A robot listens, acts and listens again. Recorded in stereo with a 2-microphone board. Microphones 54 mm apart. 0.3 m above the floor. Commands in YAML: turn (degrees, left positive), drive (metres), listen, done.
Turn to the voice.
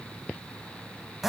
listen: true
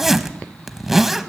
listen: true
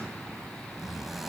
done: "I can't make out anyone speaking, only a zipper."